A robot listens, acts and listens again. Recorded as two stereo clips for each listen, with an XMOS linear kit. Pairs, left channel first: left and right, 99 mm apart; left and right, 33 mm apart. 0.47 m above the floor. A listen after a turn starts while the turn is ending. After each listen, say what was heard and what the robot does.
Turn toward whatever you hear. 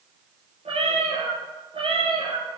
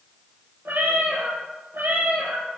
The cat meowing: about 65° right or 115° right. Turn 65° right.
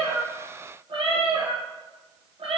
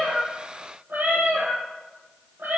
So it is at 70° right. Turn 70° right.
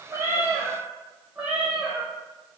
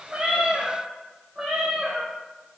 The cat meowing is now 10° right. Turn 10° right.
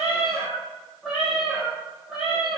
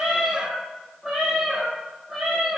Facing the cat meowing.